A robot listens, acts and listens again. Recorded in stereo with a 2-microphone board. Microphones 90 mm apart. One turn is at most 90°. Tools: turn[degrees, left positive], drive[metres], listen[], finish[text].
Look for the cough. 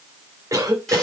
Thought: The cough: about 35° right or 145° right.
Action: turn[-35]
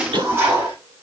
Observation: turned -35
Thought: So it is at 110° right.
Action: turn[-90]
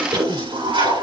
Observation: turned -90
Thought: The cough is now 60° right.
Action: turn[-60]
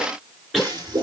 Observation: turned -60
Action: finish[Found it: a cough, straight ahead, 2 to 4 m away.]